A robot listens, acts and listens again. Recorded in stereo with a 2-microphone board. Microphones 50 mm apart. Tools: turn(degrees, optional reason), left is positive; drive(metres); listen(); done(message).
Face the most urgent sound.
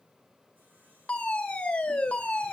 turn(degrees=20, reason="The fire alarm: about 20° left or 160° left.")
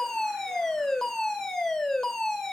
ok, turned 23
done("Facing the fire alarm, 2 to 4 m away.")